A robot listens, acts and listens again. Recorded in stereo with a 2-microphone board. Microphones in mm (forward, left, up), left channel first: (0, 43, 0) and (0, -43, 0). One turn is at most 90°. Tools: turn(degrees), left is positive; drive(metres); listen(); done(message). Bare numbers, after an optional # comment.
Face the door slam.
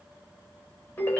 listen()
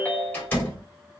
# The door slam: about 20° left or 160° left.
turn(20)
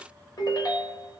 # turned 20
listen()
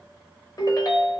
done("I heard a door slam, but can't make it out now. It was about straight ahead or 140° left.")